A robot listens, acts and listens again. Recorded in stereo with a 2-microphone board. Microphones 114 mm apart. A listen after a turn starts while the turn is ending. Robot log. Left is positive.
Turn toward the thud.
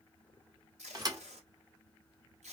note: The thud: about 35° right or 145° right.
cmd yaw -35
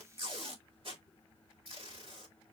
cmd idle
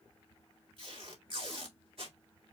end: I heard a thud, but can't make it out now. It was about straight ahead or 110° right.